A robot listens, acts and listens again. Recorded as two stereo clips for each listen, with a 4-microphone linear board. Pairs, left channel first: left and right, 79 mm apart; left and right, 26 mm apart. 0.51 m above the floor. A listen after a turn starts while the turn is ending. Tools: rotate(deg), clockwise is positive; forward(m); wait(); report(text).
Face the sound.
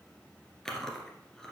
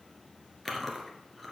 rotate(-30)
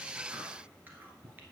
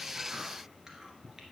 wait()
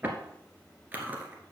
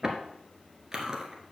rotate(25)
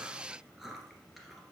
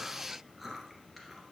report("Found it: chewing, straight ahead.")